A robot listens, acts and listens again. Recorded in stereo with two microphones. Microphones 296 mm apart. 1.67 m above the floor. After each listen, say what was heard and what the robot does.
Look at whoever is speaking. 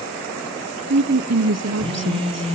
The woman speaking: about 60° right or 120° right. Turn 60° right.
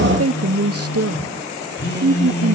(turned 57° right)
So it is at 55° right. Turn 55° right.
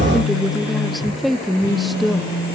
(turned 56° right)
Found it: a woman speaking, straight ahead, under 1 m away.